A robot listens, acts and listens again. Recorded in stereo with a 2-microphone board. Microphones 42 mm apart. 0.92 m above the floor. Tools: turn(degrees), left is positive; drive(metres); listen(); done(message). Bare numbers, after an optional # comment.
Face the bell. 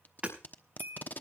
# The bell: about 60° right or 120° right.
turn(-60)
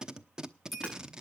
done("Facing the bell.")